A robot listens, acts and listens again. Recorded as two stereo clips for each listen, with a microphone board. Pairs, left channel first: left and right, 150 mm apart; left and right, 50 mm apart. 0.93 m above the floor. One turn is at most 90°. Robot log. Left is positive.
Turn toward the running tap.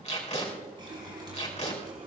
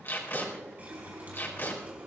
note: The running tap: about 35° right or 145° right.
cmd yaw -35
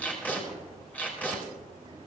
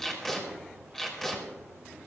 cmd idle
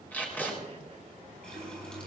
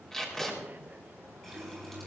end: Facing the running tap.